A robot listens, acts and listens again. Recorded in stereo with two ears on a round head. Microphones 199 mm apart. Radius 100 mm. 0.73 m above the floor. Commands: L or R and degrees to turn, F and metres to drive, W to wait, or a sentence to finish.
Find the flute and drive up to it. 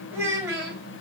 W
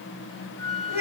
R50
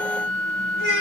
F1.0
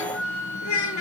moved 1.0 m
R10
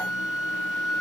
F1.0
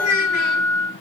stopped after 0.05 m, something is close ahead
Arrived at the flute, straight ahead.